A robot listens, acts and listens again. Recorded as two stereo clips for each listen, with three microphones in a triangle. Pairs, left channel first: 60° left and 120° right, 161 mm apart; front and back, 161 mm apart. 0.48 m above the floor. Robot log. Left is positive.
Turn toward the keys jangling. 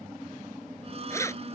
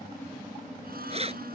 note: The keys jangling: 130° left.
cmd yaw +130
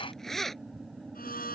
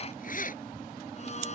note: The keys jangling is now 30° right.
cmd yaw -30
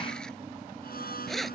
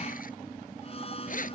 note: The keys jangling is now 30° right.
cmd yaw -30
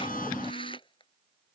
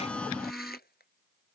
end: Facing the keys jangling.